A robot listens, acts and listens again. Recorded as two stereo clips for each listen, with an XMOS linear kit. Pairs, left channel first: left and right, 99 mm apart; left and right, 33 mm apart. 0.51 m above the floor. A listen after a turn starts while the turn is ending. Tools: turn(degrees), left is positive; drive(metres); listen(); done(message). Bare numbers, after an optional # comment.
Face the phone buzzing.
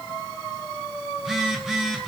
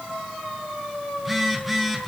turn(-30)
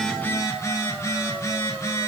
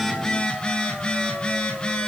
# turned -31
# So it is at 30° left.
turn(30)
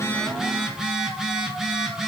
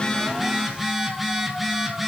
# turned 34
done("Found it: a phone buzzing, straight ahead, 2 to 4 m away.")